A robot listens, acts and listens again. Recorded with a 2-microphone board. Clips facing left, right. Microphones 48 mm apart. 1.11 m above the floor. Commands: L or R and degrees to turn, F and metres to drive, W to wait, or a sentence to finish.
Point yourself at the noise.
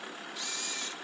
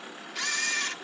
R90
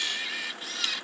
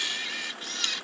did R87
Found it: a camera shutter, straight ahead.